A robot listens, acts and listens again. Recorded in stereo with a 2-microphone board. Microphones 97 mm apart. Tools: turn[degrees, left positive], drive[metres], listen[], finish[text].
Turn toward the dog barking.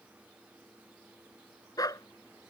Thought: The dog barking: about 40° left or 140° left.
Action: turn[40]
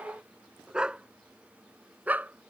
Thought: So it is at 15° right.
Action: turn[-15]
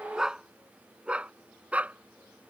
Thought: The dog barking is now 15° right.
Action: turn[-15]
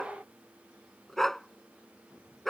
Action: finish[Facing the dog barking.]